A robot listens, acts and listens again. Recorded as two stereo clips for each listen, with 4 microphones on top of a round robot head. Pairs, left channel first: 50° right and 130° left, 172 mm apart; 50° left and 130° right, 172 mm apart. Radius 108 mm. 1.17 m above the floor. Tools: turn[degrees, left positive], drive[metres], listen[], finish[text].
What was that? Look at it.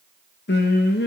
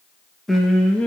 Thought: The singing: 30° right.
Action: turn[-30]
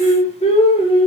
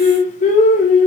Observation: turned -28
Thought: The singing is now 10° left.
Action: turn[10]
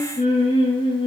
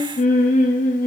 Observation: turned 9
Thought: The singing is now 10° left.
Action: turn[10]
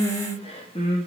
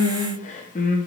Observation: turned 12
Thought: The singing is now 10° left.
Action: turn[10]
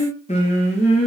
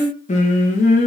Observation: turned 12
Action: finish[Found it: singing, straight ahead.]